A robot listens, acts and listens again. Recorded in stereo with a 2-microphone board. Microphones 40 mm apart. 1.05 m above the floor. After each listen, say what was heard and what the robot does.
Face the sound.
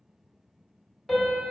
Turn 30° left.
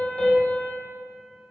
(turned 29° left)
So it is at 145° left. Turn 145° left.
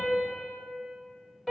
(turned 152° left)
The piano is now 10° right. Turn 10° right.
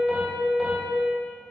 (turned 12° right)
Found it: a piano, straight ahead, 1 to 2 m away.